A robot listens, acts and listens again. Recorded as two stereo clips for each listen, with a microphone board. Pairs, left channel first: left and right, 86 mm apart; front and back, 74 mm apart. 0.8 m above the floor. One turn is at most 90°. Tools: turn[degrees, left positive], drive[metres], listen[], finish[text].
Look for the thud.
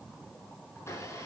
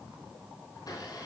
Action: listen[]
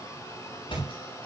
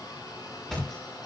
Thought: The thud: 85° left.
Action: turn[85]
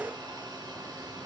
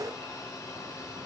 Action: finish[Facing where the thud came from. I can't hear it now.]